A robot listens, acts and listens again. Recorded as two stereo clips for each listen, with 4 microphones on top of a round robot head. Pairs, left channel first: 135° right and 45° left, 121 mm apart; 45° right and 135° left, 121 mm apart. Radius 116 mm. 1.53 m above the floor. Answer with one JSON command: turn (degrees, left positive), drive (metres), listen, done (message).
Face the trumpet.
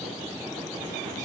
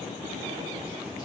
{"listen": true}
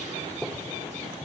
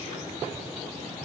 {"listen": true}
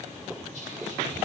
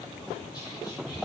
{"done": "I can't make out a trumpet to turn to."}